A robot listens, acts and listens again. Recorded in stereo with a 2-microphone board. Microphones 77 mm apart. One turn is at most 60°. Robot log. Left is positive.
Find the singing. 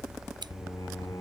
note: The singing: about 55° left or 125° left.
cmd yaw +55
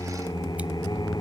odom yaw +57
note: So it is at 70° left.
cmd yaw +60
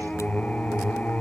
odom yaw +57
note: The singing is now 20° left.
cmd yaw +20
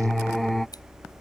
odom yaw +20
end: Facing the singing.